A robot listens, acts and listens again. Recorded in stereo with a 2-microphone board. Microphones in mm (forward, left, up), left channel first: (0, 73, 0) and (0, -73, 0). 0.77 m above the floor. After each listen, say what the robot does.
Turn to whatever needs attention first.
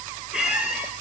Keep listening.
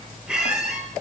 Keep listening.
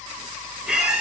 I can't make out anything urgent, only a squeak.